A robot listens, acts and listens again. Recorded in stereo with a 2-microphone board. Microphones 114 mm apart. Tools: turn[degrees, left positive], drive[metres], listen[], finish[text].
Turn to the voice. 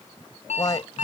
Thought: The man speaking: about 35° left or 145° left.
Action: turn[35]
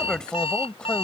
Thought: So it is at 10° left.
Action: turn[10]
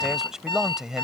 Action: finish[Found it: a man speaking, straight ahead.]